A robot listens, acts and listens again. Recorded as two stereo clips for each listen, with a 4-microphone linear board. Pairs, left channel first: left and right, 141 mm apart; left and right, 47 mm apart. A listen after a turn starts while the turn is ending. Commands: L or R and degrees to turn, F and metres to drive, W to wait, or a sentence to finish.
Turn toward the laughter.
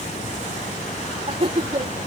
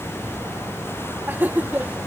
R40
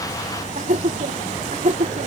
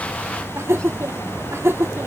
R115
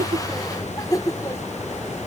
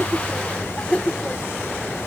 L25
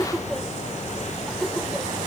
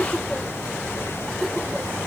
W
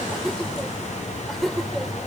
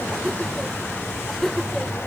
Found it: laughter, straight ahead.